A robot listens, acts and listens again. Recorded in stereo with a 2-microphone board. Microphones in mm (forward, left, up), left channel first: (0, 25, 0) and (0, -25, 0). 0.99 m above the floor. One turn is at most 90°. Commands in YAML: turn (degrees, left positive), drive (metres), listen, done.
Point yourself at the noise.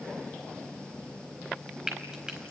turn: -30
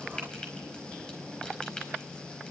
turn: 15
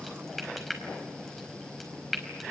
done: "Facing the frying."